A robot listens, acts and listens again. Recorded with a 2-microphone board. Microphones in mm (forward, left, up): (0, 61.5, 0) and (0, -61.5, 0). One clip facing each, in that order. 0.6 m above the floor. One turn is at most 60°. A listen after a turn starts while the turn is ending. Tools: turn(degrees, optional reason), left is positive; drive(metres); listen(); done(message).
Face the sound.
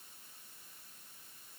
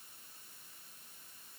listen()
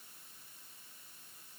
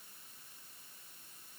listen()
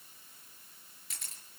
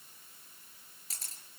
turn(degrees=-35, reason="The camera shutter: about 35° right or 145° right.")
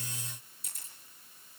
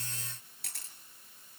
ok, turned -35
turn(degrees=-60, reason="So it is at 110° right.")
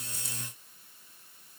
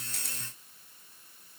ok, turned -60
turn(degrees=-50, reason="Nothing new. It was at 50° right.")
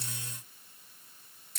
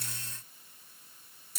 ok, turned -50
done("Facing the camera shutter, over 4 m away.")